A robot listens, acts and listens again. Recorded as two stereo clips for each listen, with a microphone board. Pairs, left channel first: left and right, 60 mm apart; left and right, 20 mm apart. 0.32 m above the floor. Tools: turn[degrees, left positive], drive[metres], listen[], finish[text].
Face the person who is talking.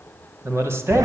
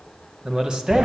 Thought: The man speaking: about 50° right or 130° right.
Action: turn[-50]
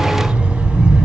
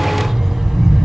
Action: listen[]
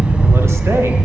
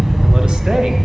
Action: listen[]
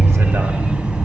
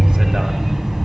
Action: finish[I heard a man speaking, but can't make it out now. It was about straight ahead or 80° right.]